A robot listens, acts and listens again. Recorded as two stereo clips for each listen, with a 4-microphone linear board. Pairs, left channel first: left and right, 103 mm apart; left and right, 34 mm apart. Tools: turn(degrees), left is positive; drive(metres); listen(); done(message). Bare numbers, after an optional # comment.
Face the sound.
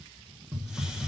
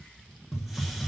turn(-30)
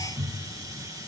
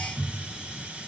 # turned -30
# So it is at 145° right.
turn(-145)
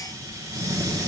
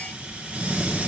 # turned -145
# The hiss is now 35° right.
turn(-35)
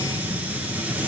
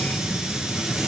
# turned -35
# The hiss is now 15° right.
turn(-15)
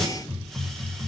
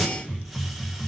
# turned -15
done("Facing the hiss.")